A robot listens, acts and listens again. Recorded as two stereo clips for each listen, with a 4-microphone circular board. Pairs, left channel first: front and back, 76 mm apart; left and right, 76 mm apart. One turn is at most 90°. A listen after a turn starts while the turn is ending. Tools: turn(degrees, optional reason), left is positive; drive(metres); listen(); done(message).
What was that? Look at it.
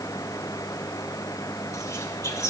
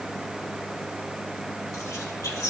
turn(degrees=45, reason="The whispering: 45° left.")
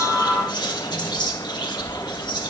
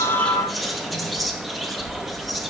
done("Facing the whispering, 1 to 2 m away.")